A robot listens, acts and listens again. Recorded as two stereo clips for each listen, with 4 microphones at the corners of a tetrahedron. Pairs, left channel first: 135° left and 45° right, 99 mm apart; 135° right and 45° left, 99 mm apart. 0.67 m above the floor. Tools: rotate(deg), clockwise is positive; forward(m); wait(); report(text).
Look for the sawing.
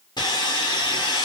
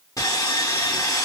rotate(-170)
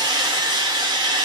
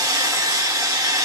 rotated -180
rotate(10)
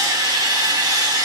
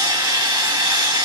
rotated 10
report("Found it: sawing, straight ahead, 1 to 2 m away.")